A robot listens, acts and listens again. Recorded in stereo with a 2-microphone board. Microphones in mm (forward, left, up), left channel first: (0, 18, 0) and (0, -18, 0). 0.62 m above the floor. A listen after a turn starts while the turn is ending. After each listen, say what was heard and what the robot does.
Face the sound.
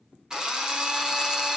The drill: about 20° right or 160° right. Turn 20° right.
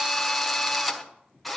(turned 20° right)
Facing the drill, 1 to 2 m away.